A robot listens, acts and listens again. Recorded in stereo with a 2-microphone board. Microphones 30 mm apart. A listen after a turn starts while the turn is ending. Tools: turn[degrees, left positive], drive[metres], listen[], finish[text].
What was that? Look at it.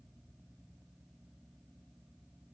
Action: listen[]
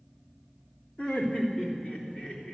Thought: The laughter: about 45° left or 135° left.
Action: turn[45]
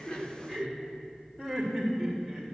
Thought: So it is at 10° left.
Action: turn[10]
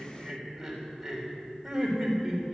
Action: finish[Found it: laughter, straight ahead.]